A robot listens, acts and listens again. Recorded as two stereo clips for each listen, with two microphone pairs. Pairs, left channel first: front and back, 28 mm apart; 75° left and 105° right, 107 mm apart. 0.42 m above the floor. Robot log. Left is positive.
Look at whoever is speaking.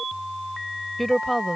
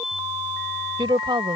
note: The woman speaking: 85° right.
cmd yaw -85
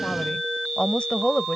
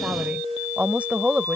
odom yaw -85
note: The woman speaking is now 35° right.
cmd yaw -35
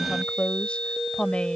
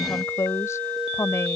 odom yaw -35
note: The woman speaking is now 20° left.
cmd yaw +20
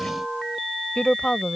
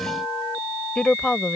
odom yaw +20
end: Facing the woman speaking.